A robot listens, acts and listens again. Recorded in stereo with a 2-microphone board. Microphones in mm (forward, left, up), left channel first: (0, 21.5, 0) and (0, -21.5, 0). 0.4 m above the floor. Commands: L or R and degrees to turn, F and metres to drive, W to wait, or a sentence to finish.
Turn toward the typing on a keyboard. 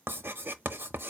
W
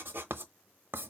W
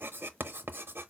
I can't make out typing on a keyboard to turn to.